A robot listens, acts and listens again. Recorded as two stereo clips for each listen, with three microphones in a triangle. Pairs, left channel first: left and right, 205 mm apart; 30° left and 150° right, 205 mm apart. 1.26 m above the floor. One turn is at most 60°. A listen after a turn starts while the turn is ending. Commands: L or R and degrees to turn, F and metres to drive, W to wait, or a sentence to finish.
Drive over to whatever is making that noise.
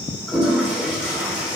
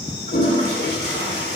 F1.0
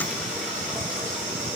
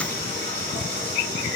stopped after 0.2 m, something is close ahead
W
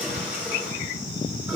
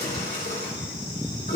R10
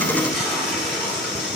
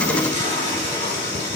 Something is in my way. I am facing the toilet flushing but have not reached it.